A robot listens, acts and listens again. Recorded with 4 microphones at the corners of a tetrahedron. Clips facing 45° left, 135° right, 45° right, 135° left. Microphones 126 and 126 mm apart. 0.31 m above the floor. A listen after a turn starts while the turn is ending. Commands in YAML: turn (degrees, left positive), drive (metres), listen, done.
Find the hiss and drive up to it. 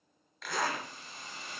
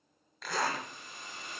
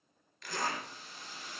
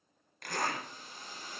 turn: 100
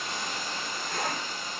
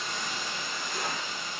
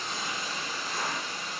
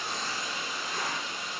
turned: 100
drive: 1.0
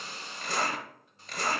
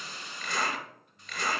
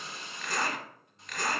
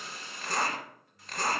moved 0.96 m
drive: 1.0
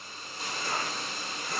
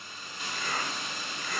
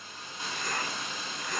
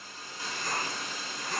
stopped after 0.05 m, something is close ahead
turn: 10
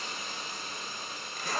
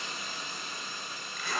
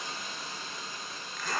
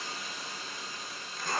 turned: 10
done: "I am next to the hiss."